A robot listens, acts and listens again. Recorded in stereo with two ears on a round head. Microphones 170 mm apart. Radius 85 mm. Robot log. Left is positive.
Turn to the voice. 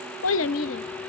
note: The child speaking: about 75° left or 105° left.
cmd yaw +75
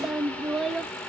end: Found it: a child speaking, straight ahead.